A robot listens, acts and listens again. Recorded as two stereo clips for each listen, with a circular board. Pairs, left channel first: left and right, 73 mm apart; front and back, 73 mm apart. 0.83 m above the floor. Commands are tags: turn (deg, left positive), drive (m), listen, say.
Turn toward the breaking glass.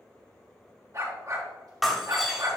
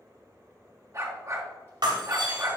<turn deg="180"/>
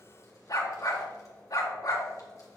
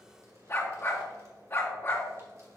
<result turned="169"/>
<turn deg="10"/>
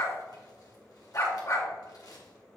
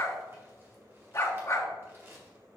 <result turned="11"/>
<say>I heard breaking glass from this way, but can't make it out now.</say>